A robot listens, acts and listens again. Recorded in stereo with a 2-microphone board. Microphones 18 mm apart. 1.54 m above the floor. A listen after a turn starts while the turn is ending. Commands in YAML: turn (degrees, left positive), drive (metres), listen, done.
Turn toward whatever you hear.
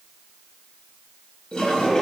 turn: 55
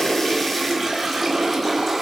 done: "Facing the toilet flushing."